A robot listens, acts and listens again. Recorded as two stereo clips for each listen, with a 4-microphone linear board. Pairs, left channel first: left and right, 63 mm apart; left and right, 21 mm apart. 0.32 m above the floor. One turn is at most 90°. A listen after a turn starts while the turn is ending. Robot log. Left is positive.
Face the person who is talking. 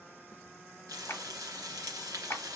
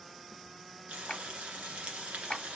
cmd idle
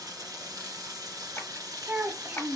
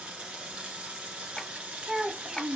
note: The child speaking: about 40° right or 140° right.
cmd yaw -40
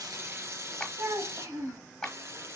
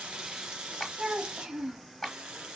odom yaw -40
note: So it is at 95° right.
cmd yaw -90
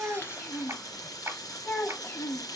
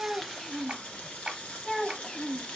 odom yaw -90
note: The child speaking is now 40° left.
cmd yaw +40
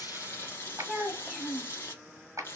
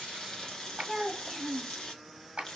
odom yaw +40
end: Found it: a child speaking, straight ahead.